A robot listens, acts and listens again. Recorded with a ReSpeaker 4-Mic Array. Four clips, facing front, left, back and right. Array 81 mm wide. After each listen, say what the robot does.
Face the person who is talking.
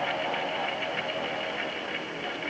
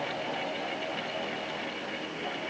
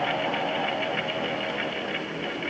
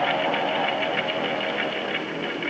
Keep listening.
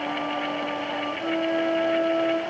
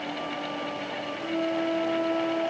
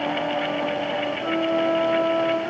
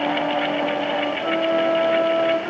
Keep listening.
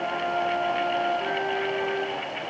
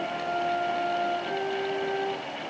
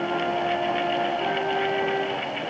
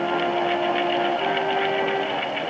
I can't make out anyone speaking, only a flute.